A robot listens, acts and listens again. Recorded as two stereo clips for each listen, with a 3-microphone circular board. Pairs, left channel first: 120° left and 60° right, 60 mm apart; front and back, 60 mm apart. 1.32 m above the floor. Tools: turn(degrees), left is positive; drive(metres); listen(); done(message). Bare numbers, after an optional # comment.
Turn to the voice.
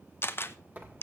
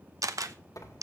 listen()
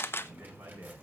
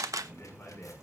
# The man speaking: 60° right.
turn(-60)
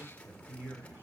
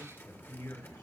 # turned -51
done("Facing the man speaking, over 4 m away.")